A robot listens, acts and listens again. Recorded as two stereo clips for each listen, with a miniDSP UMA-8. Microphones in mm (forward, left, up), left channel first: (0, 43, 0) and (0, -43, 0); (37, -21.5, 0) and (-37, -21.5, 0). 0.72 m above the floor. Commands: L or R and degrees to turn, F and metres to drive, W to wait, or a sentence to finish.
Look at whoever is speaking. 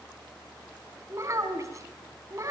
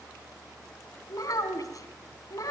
R40
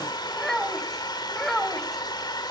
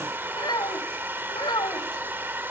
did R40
Facing the child speaking.